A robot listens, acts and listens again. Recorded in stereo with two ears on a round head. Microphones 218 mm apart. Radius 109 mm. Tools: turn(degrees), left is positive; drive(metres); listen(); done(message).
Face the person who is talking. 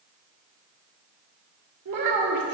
turn(degrees=-90)
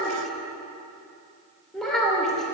done("Facing the child speaking, 2 to 4 m away.")